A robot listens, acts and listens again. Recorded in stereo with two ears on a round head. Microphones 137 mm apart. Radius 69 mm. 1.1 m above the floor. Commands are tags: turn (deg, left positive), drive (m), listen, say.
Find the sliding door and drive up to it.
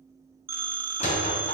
<turn deg="40"/>
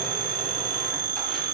<listen/>
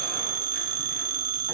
<listen/>
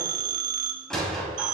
<drive m="1.0"/>
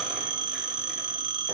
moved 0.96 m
<listen/>
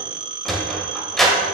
<drive m="1.0"/>
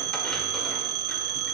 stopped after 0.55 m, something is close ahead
<listen/>
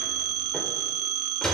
<say>Arrived at the sliding door, straight ahead.</say>